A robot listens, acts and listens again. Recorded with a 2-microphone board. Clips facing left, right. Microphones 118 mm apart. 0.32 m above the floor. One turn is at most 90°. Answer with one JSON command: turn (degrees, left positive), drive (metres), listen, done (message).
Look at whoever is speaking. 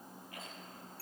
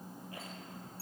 {"listen": true}
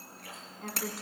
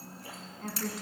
{"turn": 30}
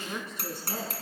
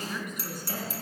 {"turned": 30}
{"turn": 90}
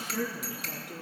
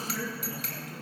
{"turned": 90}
{"turn": 70}
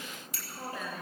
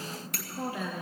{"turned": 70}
{"done": "Facing the woman speaking, over 4 m away."}